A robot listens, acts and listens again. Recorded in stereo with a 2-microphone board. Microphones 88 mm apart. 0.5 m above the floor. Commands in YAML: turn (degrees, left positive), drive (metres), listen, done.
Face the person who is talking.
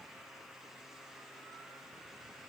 listen: true
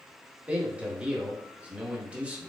turn: -30
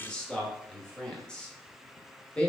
turn: 10
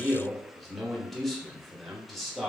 done: "Found it: a man speaking, straight ahead."